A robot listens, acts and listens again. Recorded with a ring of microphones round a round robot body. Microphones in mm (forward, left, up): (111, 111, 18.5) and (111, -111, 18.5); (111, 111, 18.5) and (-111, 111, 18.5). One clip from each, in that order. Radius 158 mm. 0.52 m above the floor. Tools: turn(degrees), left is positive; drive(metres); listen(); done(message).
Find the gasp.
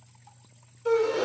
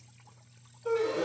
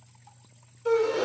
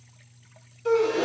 turn(degrees=120)
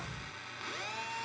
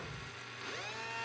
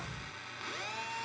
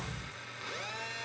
done("I heard a gasp from this way, but can't make it out now.")